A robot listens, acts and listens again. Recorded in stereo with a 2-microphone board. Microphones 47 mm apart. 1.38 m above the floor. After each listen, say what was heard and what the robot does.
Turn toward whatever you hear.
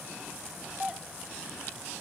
The doorbell: about 20° right or 160° right. Turn 20° right.
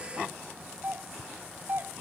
So it is at 140° right. Turn 140° right.
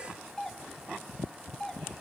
The doorbell is now 15° left. Turn 15° left.
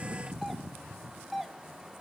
Facing the doorbell.